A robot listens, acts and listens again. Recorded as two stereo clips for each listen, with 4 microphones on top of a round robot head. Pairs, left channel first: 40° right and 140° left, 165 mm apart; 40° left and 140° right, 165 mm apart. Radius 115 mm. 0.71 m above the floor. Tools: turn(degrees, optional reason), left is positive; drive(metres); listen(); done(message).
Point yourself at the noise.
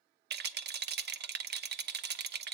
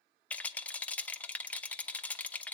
turn(degrees=120, reason="The rattle: 120° left.")
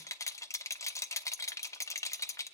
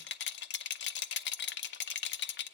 turn(degrees=35, reason="The rattle is now 35° left.")
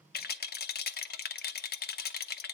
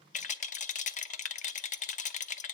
turn(degrees=-10, reason="The rattle is now 10° right.")
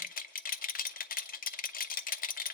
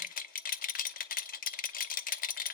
done("Facing the rattle.")